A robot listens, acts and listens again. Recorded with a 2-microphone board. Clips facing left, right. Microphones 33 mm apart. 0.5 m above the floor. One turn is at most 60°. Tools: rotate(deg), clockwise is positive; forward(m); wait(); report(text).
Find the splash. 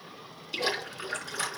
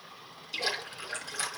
rotate(-30)
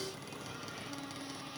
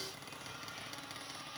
wait()
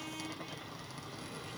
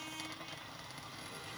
report("I heard a splash, but can't make it out now. It was about 15° right or 135° left.")